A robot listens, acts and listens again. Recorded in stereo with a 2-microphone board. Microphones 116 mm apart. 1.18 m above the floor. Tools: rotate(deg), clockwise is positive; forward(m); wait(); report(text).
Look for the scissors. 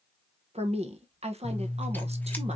rotate(-30)
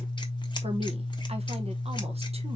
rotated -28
rotate(-135)
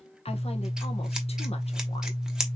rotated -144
report("Facing the scissors, 1 to 2 m away.")